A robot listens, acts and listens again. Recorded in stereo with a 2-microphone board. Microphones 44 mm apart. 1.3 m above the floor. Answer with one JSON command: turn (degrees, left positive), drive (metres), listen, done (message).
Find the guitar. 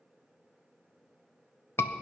{"listen": true}
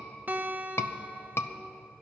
{"turn": -50}
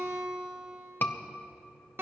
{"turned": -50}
{"turn": -75}
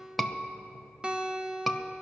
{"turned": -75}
{"turn": -25}
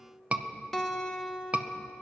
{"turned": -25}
{"turn": 10}
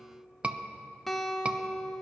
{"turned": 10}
{"done": "Facing the guitar."}